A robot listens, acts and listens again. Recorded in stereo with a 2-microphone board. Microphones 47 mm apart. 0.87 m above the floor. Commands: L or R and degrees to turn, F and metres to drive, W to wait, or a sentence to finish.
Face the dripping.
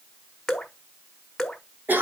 L30
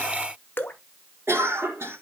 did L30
L135
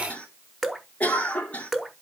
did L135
Facing the dripping.